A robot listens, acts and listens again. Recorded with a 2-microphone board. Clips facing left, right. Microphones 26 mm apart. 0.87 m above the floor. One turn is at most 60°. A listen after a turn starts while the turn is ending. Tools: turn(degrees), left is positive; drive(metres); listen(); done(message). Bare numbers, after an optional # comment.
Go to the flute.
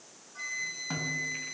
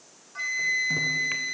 # The flute: about 30° right or 150° right.
turn(-30)
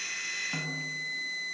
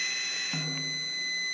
# So it is at 120° right.
turn(-60)
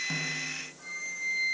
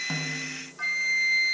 # The flute is now 65° right.
turn(-60)
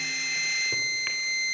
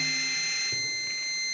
drive(1.0)
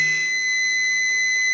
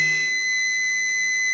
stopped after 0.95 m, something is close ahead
# The flute is now 10° left.
turn(10)
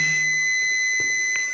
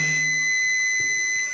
done("I am next to the flute.")